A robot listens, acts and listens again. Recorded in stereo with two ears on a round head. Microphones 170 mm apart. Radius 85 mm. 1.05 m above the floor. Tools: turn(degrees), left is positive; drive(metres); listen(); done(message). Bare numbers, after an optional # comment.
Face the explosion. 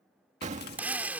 # The explosion: about 40° right or 140° right.
turn(-40)
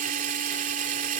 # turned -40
listen()
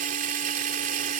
done("I heard an explosion, but can't make it out now. It was about straight ahead or 100° right.")